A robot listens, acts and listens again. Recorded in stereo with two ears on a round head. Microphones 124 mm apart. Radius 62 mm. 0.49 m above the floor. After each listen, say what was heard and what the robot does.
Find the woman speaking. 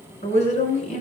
The woman speaking: about 55° left or 125° left. Turn 55° left.
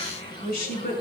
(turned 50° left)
So it is at 70° left. Turn 70° left.
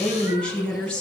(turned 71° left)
The woman speaking is now 10° left. Turn 10° left.
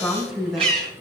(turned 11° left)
Found it: a woman speaking, straight ahead.